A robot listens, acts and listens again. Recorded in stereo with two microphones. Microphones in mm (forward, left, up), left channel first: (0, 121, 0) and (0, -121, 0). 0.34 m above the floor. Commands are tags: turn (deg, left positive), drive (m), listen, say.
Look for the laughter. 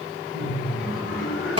<turn deg="55"/>
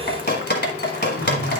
<listen/>
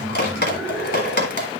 <say>Found it: laughter, straight ahead.</say>